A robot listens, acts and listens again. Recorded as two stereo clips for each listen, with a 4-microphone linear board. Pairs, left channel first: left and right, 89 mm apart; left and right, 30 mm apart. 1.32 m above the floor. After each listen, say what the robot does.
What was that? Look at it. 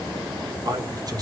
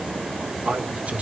Turn 45° right.
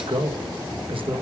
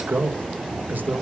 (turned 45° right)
Turn 90° right.
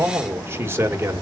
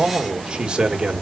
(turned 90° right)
Turn 30° right.
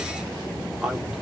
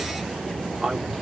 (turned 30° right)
Found it: a man speaking, straight ahead.